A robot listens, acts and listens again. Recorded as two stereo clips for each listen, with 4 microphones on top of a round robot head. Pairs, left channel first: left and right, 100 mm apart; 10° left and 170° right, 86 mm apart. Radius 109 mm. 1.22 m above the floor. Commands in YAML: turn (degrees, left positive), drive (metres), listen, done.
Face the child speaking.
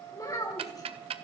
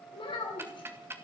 turn: 35
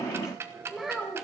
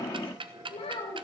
done: "Found it: a child speaking, straight ahead."